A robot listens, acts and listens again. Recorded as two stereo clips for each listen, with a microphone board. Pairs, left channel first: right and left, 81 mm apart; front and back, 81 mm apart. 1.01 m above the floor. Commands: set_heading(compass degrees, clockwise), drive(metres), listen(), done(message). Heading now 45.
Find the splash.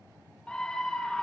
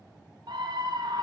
listen()
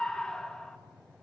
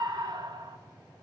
listen()
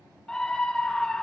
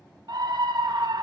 done("I can't make out a splash, only a scream.")